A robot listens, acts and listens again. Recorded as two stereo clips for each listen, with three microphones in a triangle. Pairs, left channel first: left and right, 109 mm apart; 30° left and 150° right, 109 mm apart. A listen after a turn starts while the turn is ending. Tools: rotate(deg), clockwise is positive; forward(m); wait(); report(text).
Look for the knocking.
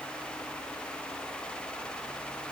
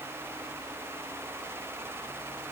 wait()
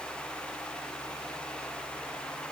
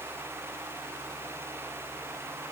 wait()
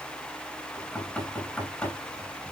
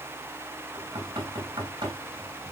rotate(-165)
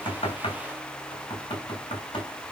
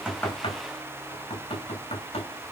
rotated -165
rotate(-50)
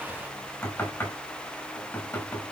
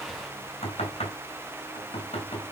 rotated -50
rotate(-15)
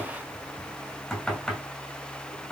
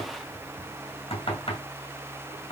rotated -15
report("Facing the knocking, over 4 m away.")